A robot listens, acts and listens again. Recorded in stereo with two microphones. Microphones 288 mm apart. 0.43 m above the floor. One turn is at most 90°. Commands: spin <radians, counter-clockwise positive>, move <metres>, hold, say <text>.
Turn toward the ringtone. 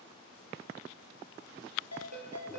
spin -1.13
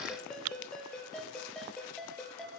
say Found it: a ringtone, straight ahead.